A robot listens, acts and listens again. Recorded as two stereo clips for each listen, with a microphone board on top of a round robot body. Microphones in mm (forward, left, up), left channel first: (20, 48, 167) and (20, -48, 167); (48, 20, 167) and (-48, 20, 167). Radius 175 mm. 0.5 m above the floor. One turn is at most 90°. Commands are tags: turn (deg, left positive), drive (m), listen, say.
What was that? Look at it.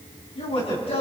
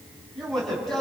<turn deg="85"/>
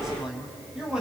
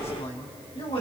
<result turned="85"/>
<say>Facing the man speaking, over 4 m away.</say>